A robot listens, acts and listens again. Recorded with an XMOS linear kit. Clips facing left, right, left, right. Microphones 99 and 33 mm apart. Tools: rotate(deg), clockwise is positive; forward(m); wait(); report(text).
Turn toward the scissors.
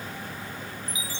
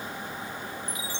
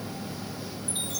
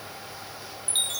wait()
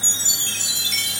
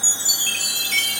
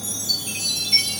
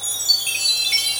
wait()
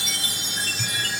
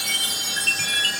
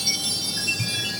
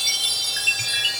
rotate(15)
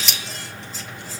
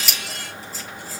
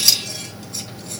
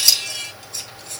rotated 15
report("Found it: scissors, straight ahead.")